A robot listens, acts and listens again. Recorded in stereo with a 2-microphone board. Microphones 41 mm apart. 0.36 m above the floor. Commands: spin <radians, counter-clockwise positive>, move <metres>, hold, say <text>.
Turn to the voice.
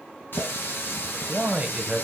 spin -0.52
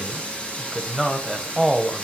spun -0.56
say Facing the man speaking.